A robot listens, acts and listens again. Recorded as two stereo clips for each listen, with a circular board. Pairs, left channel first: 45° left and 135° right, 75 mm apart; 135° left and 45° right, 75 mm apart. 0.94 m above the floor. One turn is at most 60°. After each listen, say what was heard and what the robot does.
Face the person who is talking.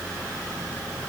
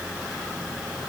Keep listening.
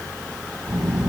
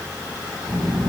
The child speaking: 45° right. Turn 45° right.
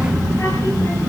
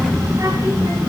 Found it: a child speaking, straight ahead.